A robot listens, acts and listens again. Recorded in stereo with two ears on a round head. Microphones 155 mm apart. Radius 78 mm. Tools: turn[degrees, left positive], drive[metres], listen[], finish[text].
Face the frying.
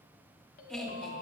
Action: listen[]
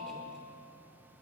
Action: listen[]
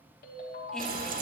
Thought: The frying: about 45° right or 135° right.
Action: turn[-45]
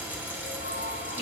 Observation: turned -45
Thought: So it is at 10° right.
Action: turn[-10]
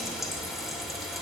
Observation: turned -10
Action: finish[Found it: frying, straight ahead.]